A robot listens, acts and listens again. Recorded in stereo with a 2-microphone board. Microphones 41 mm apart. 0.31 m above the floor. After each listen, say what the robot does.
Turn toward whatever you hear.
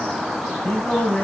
Turn 35° left.
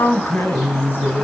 Turn 120° left.
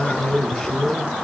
Turn 15° left.
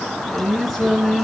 Facing the singing, over 4 m away.